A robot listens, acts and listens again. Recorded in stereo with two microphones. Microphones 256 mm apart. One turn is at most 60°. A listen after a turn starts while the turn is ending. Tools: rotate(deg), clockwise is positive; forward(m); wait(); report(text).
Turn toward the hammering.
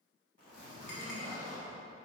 wait()
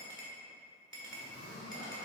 wait()
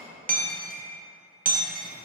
rotate(35)
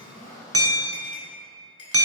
rotate(60)
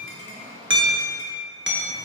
rotate(50)
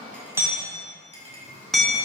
report("Facing the hammering.")